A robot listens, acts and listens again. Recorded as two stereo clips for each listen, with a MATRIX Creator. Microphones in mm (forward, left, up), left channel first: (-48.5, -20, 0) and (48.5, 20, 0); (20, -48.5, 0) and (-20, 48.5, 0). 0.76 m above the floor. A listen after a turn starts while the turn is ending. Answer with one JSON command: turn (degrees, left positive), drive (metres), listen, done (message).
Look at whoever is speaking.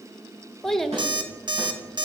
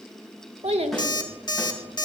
{"turn": 115}
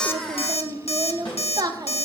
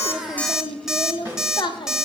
{"turn": -25}
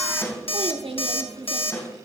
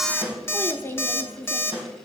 {"done": "Facing the child speaking, under 1 m away."}